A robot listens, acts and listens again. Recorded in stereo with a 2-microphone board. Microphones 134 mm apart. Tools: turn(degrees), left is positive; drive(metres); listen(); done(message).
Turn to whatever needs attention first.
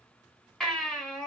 turn(degrees=30)
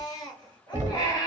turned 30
turn(degrees=145)
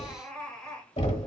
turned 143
done("Found it: a baby crying, straight ahead, 2 to 4 m away.")